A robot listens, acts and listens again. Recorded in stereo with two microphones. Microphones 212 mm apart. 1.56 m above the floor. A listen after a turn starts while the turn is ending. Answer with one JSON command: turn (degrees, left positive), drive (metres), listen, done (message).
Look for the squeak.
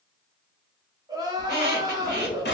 {"turn": -50}
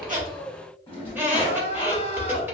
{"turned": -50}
{"turn": -10}
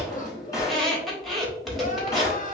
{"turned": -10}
{"done": "Found it: a squeak, straight ahead, under 1 m away."}